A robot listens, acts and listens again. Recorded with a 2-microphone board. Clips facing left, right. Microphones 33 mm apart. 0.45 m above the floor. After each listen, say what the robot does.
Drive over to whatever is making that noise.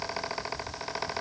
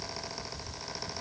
Keep listening.
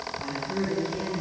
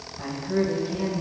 Turn 30° right.
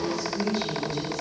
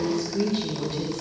Turn 120° right.
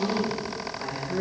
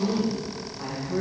Drive 1.0 m forward.
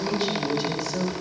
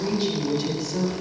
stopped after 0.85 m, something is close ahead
Arrived at the woman speaking, straight ahead.